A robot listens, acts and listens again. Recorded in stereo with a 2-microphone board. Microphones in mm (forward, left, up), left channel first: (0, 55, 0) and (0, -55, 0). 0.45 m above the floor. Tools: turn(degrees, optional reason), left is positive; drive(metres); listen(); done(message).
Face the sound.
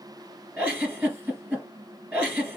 turn(degrees=-15, reason="The giggle: about 15° right or 165° right.")
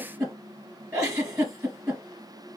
turn(degrees=-150, reason="So it is at 150° right.")
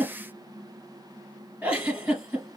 turn(degrees=-10, reason="The giggle is now 10° right.")
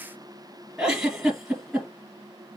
done("Found it: a giggle, straight ahead, 2 to 4 m away.")